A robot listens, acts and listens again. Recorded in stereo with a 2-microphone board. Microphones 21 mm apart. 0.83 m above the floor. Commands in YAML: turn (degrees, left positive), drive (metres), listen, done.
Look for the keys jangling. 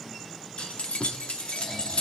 turn: 90
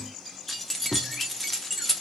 done: "Facing the keys jangling."